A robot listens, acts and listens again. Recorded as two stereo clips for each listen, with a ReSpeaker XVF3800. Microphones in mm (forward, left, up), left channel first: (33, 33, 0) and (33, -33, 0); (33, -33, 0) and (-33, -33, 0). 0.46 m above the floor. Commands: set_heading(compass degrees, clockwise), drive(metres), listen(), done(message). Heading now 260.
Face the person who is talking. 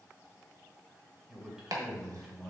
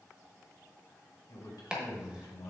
done("Facing the man speaking.")